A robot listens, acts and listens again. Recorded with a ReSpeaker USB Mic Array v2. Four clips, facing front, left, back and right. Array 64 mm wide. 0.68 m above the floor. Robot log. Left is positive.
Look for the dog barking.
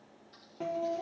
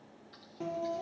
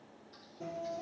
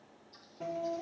cmd idle
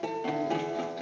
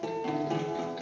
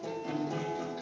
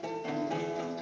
cmd idle
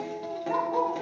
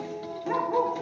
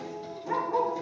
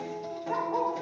note: The dog barking: 105° left.
cmd yaw +105
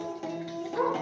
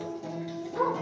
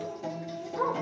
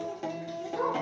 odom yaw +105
note: The dog barking is now 15° left.
cmd yaw +15
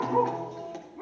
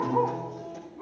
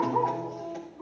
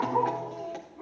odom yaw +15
end: Found it: a dog barking, straight ahead, 2 to 4 m away.